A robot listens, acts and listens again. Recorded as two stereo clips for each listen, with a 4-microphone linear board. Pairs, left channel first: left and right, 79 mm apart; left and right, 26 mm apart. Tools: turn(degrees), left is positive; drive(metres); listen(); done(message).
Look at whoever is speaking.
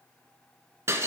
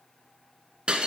listen()
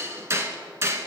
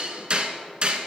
listen()
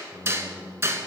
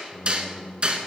turn(degrees=35)
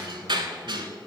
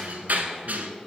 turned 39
listen()
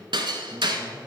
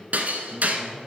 listen()
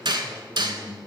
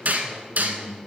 turn(degrees=40)
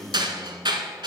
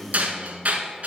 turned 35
turn(degrees=110)
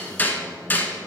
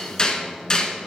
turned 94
turn(degrees=20)
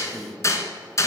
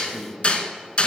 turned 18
done("Found it: a man speaking, straight ahead.")